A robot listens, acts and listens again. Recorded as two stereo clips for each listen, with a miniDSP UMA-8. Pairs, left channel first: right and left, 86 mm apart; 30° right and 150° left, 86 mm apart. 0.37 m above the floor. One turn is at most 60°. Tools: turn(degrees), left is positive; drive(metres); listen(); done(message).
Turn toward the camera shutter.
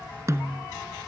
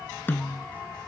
listen()
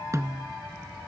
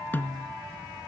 listen()
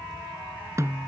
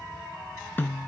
done("I can't make out a camera shutter to turn to.")